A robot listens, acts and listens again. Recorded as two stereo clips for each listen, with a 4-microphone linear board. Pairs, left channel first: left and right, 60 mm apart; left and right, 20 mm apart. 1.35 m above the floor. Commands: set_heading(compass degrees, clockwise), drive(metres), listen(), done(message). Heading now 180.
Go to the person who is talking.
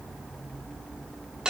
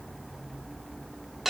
listen()
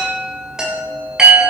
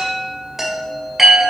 listen()
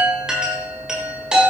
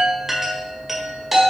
done("I can't make out anyone speaking to turn to.")